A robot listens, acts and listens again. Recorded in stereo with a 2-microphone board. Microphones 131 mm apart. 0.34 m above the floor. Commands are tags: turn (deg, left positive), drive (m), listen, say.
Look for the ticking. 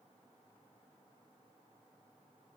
<listen/>
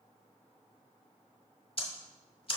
<turn deg="45"/>
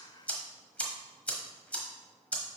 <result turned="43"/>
<turn deg="10"/>
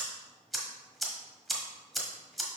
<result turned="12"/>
<say>Facing the ticking.</say>